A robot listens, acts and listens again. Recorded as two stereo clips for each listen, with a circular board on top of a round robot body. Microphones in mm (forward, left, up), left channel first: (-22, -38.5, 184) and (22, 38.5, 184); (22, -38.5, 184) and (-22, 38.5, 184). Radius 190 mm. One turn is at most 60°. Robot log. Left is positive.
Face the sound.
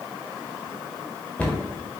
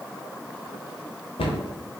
note: The cupboard door: 40° right.
cmd yaw -40
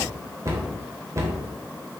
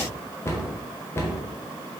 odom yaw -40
end: Found it: a cupboard door, straight ahead.